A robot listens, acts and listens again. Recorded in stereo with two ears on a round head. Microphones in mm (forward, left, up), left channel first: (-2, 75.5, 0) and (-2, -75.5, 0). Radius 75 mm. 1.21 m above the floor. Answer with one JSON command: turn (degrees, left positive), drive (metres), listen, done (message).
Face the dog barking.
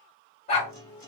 {"turn": 40}
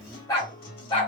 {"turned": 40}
{"turn": 30}
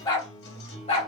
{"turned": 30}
{"turn": 35}
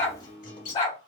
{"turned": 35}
{"turn": 30}
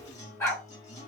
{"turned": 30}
{"turn": 15}
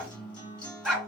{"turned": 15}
{"done": "Facing the dog barking."}